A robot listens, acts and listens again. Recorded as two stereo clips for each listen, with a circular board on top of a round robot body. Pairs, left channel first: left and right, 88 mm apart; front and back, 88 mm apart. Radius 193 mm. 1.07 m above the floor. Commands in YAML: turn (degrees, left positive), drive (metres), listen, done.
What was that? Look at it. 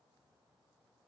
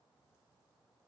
listen: true
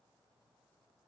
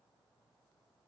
listen: true
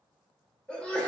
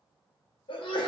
turn: 10
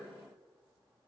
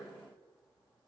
done: "I heard a sneeze from this way, but can't make it out now."